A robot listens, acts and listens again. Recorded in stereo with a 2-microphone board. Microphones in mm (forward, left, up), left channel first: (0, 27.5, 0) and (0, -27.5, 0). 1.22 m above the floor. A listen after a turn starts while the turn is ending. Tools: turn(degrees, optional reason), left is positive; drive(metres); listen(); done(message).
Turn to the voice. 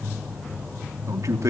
turn(degrees=-70, reason="The man speaking: about 70° right or 110° right.")
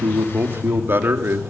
turn(degrees=-45, reason="So it is at 45° right.")
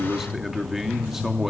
done("Facing the man speaking, 2 to 4 m away.")